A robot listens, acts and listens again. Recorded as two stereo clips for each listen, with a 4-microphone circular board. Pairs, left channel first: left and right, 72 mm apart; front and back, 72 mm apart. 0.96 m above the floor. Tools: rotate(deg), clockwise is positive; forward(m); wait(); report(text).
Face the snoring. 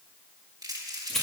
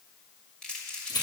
wait()
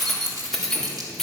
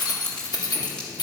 wait()
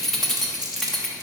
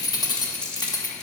report("I can't make out snoring, only keys jangling and crumpling.")